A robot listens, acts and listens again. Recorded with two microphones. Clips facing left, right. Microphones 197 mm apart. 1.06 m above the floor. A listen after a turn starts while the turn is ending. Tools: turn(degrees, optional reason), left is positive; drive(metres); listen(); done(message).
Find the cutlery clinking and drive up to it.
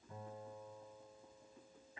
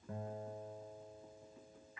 listen()
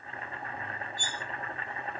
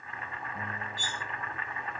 turn(degrees=-90)
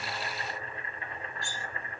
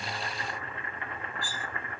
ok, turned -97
drive(metres=1.0)
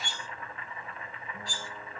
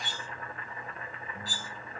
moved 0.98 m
drive(metres=1.0)
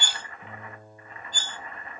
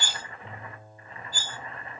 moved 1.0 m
turn(degrees=-10, reason="The cutlery clinking is now 10° right.")
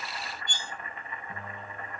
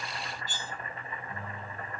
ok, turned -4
drive(metres=1.0)
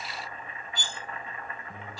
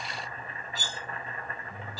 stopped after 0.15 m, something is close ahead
done("I am next to the cutlery clinking.")